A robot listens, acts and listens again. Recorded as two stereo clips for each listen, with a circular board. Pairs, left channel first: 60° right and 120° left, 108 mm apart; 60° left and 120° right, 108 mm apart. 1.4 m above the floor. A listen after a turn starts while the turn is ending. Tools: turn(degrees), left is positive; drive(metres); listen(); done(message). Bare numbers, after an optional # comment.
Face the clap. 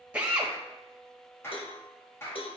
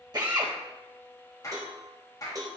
done("Facing the clap.")